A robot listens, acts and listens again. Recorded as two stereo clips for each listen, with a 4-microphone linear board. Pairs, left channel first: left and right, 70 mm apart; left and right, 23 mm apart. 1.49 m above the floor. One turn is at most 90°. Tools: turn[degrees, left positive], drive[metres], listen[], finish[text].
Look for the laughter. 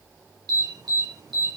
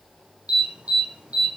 Action: listen[]
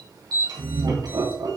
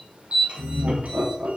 Action: turn[-90]
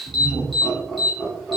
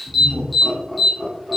Action: finish[Facing the laughter.]